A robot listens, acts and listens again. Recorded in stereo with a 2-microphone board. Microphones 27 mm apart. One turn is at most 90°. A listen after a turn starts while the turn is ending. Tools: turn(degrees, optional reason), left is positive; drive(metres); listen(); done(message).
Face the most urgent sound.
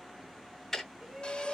turn(degrees=-35, reason="The shout: about 35° right or 145° right.")
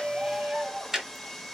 turn(degrees=-90, reason="So it is at 110° right.")
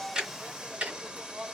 turn(degrees=-65, reason="The shout is now 65° right.")
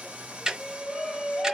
turn(degrees=20, reason="The shout is now 20° left.")
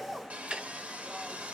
listen()
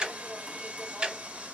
listen()
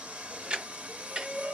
done("Found it: a shout, straight ahead.")